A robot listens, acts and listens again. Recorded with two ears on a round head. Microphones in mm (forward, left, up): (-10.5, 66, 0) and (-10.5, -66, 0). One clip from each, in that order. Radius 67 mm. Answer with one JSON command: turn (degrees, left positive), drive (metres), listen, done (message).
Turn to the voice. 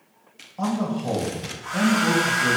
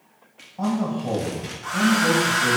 {"turn": 50}
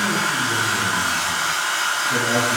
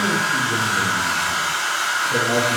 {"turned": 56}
{"listen": true}
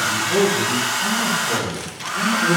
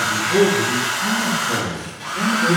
{"turn": 85}
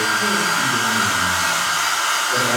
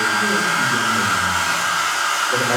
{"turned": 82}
{"listen": true}
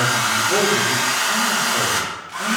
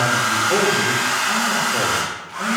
{"listen": true}
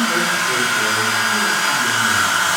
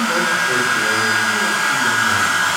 {"done": "Facing where the man speaking came from. I can't hear it now."}